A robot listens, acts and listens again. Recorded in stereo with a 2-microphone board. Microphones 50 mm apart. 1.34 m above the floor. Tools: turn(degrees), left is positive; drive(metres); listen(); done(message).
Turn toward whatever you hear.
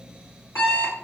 turn(degrees=70)
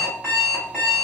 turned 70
turn(degrees=25)
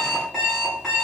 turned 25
done("Found it: an alarm clock, straight ahead.")